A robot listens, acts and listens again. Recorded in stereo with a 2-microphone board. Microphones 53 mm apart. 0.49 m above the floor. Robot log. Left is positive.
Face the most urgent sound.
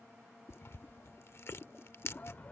note: The shout: about 30° left or 150° left.
cmd yaw +30
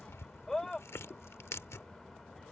end: Facing the shout.